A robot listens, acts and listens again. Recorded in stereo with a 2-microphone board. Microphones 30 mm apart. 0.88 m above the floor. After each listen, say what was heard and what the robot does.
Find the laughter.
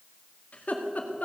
The laughter: about 60° left or 120° left. Turn 60° left.
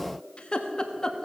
So it is at 25° left. Turn 25° left.
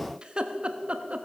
The laughter is now 45° right. Turn 45° right.
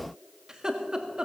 The laughter is now 25° right. Turn 25° right.
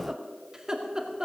The laughter is now 20° right. Turn 20° right.
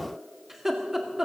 Found it: laughter, straight ahead.